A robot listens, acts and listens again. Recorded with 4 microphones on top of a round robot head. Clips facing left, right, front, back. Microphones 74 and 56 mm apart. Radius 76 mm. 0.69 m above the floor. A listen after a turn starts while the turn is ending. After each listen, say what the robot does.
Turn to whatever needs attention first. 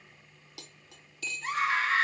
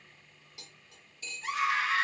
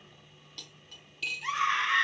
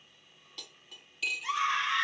Turn 40° left.
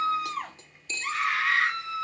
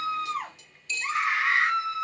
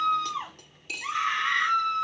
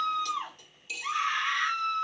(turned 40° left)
Turn 20° right.
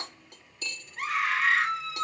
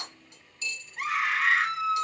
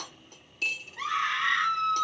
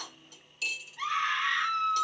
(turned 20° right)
Found it: a scream, straight ahead, 2 to 4 m away.